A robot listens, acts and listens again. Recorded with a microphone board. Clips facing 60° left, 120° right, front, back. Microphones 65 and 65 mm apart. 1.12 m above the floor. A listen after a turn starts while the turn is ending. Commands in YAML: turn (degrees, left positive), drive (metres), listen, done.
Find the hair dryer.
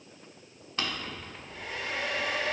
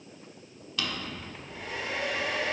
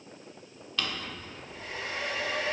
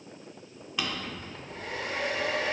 turn: 155
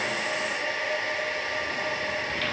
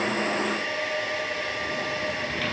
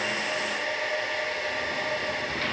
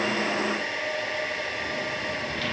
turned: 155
turn: 15
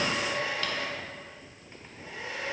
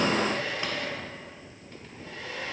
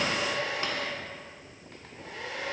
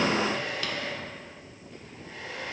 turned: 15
done: "Facing the hair dryer, 1 to 2 m away."